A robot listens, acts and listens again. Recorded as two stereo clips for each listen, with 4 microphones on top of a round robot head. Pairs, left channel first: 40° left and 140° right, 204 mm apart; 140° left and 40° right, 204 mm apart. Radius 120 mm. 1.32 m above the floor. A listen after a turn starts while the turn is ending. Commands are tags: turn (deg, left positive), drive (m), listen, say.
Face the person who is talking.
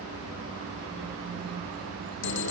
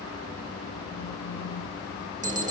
<listen/>
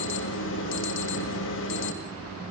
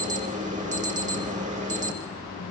<listen/>
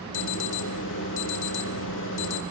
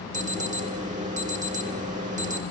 <say>I can't make out anyone speaking to turn to.</say>